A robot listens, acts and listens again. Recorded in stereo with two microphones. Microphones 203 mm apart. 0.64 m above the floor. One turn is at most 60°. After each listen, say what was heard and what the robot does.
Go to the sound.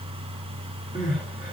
The crying: about 40° left or 140° left. Turn 40° left.
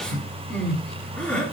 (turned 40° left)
Drive 1.0 m forward.
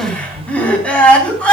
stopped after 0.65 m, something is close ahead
Blocked. The crying is further on, straight ahead.